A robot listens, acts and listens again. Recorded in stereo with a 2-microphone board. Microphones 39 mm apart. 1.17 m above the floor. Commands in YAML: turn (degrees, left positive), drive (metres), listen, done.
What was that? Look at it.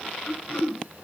turn: 45
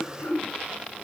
turn: 90
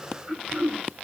turn: -30
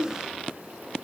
done: "Facing the throat clearing."